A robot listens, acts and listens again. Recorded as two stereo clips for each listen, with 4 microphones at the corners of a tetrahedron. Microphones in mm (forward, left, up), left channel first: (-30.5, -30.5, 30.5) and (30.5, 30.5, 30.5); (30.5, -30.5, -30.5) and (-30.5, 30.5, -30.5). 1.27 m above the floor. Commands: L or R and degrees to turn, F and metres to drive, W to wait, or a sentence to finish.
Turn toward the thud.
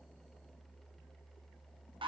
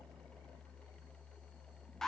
W
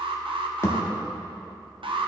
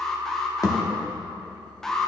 R85
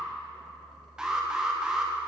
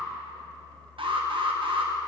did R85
I heard a thud from this way, but can't make it out now.